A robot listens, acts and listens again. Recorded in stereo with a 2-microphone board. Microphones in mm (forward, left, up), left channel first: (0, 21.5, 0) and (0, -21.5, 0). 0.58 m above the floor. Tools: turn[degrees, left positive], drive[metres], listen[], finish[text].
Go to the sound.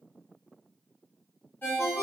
Thought: The ringtone: about 65° left or 115° left.
Action: turn[65]
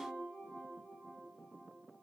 Action: listen[]
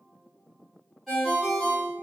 Action: drive[1.0]
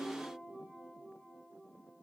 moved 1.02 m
Action: listen[]
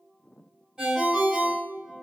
Thought: The ringtone is now 15° right.
Action: turn[-15]
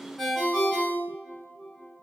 Action: drive[1.0]
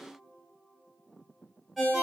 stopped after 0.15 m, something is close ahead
Action: finish[I am next to the ringtone.]